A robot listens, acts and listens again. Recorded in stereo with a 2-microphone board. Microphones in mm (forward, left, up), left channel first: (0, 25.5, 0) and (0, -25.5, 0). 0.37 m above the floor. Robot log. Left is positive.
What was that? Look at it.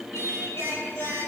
cmd yaw +90
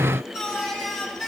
end: Found it: singing, straight ahead.